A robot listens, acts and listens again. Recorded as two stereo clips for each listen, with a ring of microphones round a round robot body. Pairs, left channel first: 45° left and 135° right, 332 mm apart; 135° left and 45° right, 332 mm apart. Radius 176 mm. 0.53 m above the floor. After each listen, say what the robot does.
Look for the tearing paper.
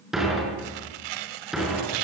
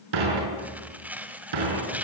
Turn 130° right.
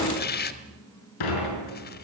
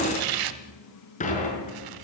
Turn 20° right.
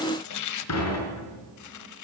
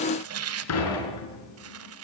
Facing the tearing paper, 1 to 2 m away.